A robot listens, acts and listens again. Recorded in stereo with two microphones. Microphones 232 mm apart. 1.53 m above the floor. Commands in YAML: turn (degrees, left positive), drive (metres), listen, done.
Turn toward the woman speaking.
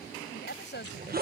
turn: 50
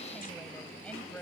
done: "Facing the woman speaking."